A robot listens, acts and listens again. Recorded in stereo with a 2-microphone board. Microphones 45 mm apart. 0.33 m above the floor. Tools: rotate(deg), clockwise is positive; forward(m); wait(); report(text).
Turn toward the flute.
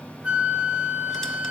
rotate(25)
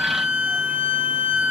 rotate(130)
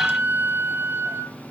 rotate(70)
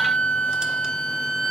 rotate(-15)
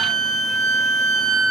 report("Found it: a flute, straight ahead.")